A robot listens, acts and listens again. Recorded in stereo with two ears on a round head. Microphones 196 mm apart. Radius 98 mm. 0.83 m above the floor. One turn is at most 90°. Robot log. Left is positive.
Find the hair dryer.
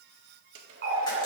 note: The hair dryer: about 65° right or 115° right.
cmd yaw -65
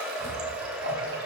end: Facing the hair dryer.